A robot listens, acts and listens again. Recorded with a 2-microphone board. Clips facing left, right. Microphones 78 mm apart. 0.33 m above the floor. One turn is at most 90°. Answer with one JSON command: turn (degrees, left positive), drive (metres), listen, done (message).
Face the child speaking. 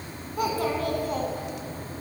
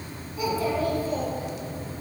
{"turn": 60}
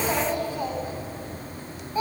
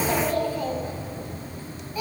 {"turn": 35}
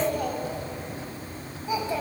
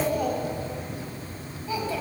{"turn": 25}
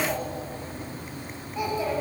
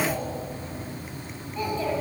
{"turn": 10}
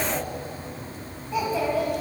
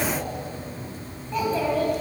{"done": "Facing the child speaking."}